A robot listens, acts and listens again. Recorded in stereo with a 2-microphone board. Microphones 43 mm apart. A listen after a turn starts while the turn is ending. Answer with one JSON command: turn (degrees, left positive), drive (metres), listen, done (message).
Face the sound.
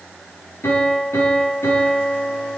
{"turn": 90}
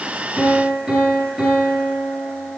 {"done": "Facing the piano, over 4 m away."}